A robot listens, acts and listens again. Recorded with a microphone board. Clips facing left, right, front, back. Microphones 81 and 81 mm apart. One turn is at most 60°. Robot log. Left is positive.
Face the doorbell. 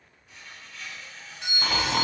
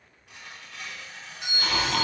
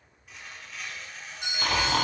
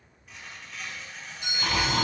note: The doorbell: 10° right.
cmd yaw -10
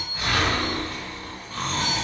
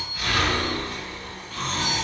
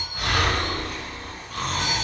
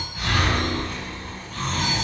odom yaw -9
cmd idle
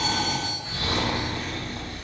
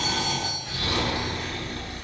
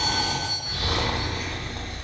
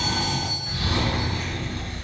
cmd idle
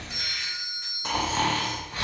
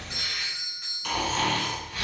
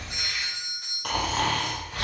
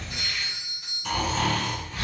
end: Facing the doorbell.